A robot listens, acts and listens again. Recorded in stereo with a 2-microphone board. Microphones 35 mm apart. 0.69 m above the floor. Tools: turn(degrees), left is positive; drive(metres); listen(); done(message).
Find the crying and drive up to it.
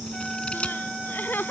turn(degrees=90)
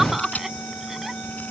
turn(degrees=-10)
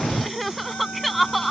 drive(metres=1.0)
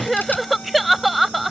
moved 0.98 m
drive(metres=1.0)
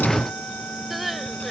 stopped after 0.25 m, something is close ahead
done("I am next to the crying.")